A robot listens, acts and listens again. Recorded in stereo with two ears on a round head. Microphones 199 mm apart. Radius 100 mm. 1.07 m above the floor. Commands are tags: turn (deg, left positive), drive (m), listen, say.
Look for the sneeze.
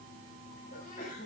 <turn deg="40"/>
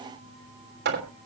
<listen/>
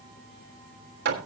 <say>I heard a sneeze, but can't make it out now. It was about straight ahead or 100° left.</say>